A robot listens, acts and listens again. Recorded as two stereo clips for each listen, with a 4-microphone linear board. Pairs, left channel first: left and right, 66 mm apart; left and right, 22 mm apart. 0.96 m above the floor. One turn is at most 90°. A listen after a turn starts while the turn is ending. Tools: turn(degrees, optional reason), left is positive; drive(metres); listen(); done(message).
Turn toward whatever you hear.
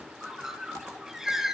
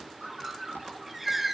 turn(degrees=-30)
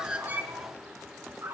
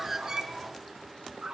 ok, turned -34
turn(degrees=-90, reason="So it is at 140° right.")
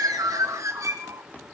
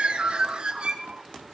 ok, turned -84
turn(degrees=-55, reason="The bird is now 55° right.")
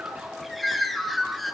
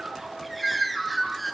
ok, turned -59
done("Found it: a bird, straight ahead.")